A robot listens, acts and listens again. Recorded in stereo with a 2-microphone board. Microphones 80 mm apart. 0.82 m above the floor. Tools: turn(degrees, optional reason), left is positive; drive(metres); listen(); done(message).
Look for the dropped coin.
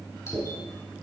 turn(degrees=-30)
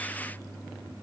listen()
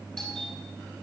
done("I heard a dropped coin, but can't make it out now. It was about 20° left or 140° right.")